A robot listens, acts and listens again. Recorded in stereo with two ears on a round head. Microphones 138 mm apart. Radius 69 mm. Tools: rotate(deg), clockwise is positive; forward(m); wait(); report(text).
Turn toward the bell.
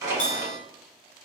rotate(-50)
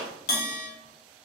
rotate(-75)
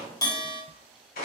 rotate(-25)
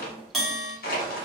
report("Facing the bell, 1 to 2 m away.")